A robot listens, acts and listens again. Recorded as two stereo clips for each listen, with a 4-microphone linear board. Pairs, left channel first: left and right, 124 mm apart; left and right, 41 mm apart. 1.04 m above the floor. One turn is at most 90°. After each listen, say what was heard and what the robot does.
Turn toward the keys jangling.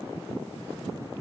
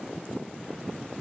Keep listening.
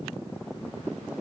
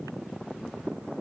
Keep listening.
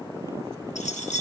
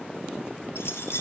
The keys jangling: about 75° left or 105° left. Turn 75° left.
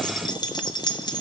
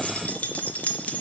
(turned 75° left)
So it is at 35° left. Turn 35° left.
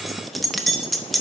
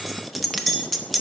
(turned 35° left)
Found it: keys jangling, straight ahead, under 1 m away.